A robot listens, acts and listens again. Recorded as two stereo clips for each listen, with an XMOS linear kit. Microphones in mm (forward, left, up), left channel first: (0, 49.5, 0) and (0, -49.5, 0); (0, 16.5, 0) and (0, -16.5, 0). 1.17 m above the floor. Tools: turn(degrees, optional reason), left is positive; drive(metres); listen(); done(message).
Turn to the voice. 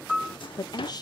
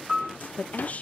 turn(degrees=45, reason="The woman speaking: about 45° left or 135° left.")
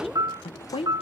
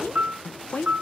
turn(degrees=90, reason="So it is at 90° left.")
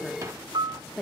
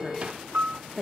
turn(degrees=10, reason="The woman speaking is now 10° left.")
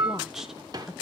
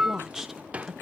done("Found it: a woman speaking, straight ahead.")